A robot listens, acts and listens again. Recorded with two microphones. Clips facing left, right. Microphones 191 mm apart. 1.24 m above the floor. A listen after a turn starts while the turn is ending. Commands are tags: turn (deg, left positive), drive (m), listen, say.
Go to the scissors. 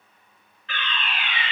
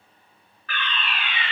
<listen/>
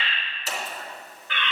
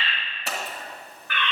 <turn deg="-65"/>
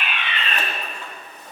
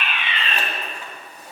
<turn deg="-10"/>
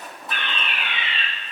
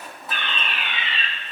<drive m="1.0"/>
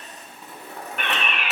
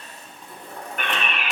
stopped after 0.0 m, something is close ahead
<say>Blocked. The scissors is further on, straight ahead.</say>